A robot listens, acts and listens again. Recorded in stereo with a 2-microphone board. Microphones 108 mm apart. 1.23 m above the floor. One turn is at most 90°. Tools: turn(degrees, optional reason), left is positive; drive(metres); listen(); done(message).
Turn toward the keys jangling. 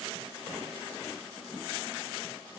listen()
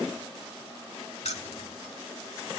turn(degrees=90)
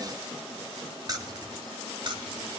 turn(degrees=-45, reason="So it is at 45° right.")
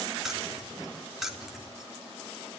done("Facing the keys jangling, 2 to 4 m away.")